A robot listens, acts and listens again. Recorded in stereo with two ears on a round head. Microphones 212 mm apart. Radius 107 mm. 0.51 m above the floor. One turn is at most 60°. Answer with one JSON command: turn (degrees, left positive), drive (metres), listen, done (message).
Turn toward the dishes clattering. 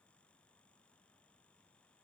{"listen": true}
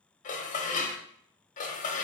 {"turn": 35}
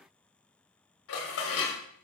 {"turn": 60}
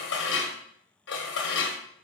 {"turn": 60}
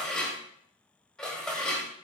{"done": "Facing the dishes clattering, under 1 m away."}